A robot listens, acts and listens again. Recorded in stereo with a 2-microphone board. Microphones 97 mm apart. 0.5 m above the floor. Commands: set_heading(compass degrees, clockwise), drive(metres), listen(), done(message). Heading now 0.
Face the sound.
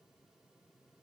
listen()
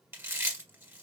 set_heading(20)
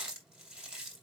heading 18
set_heading(28)
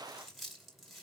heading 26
done("Facing the chewing, 1 to 2 m away.")